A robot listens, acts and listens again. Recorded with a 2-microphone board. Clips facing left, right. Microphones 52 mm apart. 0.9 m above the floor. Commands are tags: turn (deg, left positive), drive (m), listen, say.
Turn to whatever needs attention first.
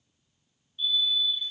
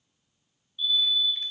<turn deg="30"/>
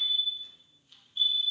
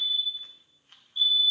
<turn deg="115"/>
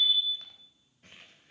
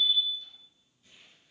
<turn deg="10"/>
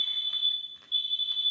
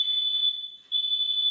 <say>Facing the fire alarm, 2 to 4 m away.</say>